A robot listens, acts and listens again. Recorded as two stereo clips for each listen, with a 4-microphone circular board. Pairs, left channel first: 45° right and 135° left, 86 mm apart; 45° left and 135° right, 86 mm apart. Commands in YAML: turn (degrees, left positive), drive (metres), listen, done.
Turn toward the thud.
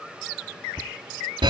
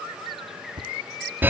turn: -105
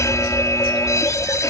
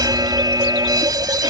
done: "I heard a thud from this way, but can't make it out now."